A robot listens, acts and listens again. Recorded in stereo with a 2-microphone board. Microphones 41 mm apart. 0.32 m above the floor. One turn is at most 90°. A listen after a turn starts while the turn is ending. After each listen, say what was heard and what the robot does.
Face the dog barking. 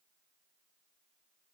Keep listening.
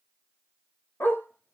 The dog barking: about 60° left or 120° left. Turn 60° left.
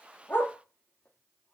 Keep listening.
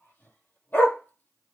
So it is at 55° left. Turn 55° left.
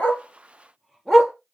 Found it: a dog barking, straight ahead.